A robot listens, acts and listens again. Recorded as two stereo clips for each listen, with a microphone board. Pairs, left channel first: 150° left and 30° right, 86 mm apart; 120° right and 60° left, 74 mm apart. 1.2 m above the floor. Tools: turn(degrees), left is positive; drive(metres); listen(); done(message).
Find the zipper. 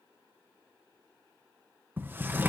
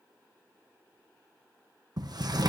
listen()
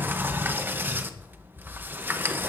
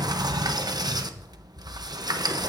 listen()
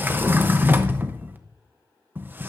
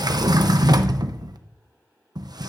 done("I can't make out a zipper, only a sliding door.")